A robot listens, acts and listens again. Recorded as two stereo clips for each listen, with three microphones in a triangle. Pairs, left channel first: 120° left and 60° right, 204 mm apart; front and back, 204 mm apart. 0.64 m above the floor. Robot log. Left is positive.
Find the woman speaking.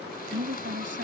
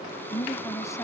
note: The woman speaking: 75° right.
cmd yaw -75
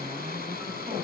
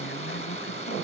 cmd idle
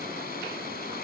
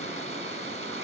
cmd idle
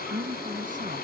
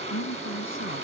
note: The woman speaking is now 10° right.
cmd yaw -10
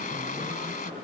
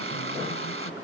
cmd idle
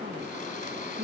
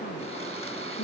note: The woman speaking is now 15° right.
cmd yaw -15
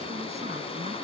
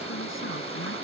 cmd idle
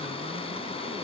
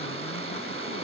cmd idle
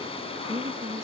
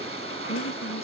end: Found it: a woman speaking, straight ahead.